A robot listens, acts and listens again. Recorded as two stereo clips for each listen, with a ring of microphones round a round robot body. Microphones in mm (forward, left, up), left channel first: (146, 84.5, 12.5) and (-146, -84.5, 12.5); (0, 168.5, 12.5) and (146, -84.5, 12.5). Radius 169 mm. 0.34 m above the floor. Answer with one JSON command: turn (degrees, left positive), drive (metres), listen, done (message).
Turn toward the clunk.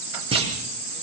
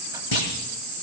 {"turn": 135}
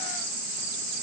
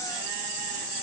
{"done": "I heard a clunk from this way, but can't make it out now."}